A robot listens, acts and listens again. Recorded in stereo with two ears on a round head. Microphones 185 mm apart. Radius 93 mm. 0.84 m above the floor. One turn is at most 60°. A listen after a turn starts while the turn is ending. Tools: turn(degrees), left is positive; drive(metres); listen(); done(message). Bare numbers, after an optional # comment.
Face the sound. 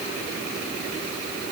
listen()
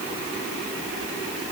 listen()
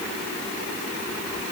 done("I can't make out anything.")